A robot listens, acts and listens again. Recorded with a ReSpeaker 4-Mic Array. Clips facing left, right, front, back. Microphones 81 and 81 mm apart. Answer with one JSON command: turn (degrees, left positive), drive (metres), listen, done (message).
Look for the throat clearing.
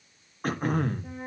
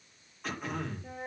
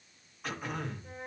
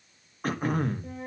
{"turn": 135}
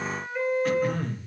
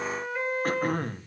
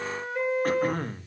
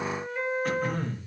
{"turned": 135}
{"turn": -45}
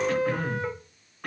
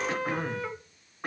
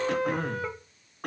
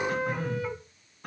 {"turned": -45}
{"turn": -20}
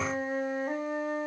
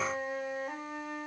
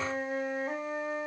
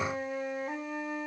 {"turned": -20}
{"listen": true}
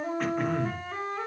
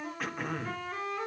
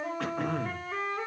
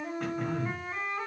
{"done": "Found it: throat clearing, straight ahead."}